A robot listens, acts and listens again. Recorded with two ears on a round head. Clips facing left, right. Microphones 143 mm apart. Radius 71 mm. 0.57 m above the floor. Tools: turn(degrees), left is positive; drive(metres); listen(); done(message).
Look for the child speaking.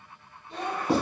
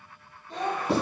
turn(degrees=-35)
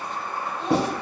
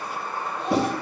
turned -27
listen()
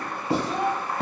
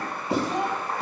turn(degrees=-10)
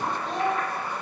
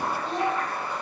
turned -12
done("Facing the child speaking.")